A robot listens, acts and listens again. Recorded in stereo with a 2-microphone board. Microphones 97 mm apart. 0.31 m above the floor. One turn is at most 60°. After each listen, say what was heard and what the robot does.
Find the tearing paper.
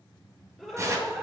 The tearing paper: about 30° right or 150° right. Turn 30° right.
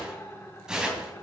So it is at 10° right. Turn 10° right.
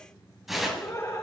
Found it: tearing paper, straight ahead, 2 to 4 m away.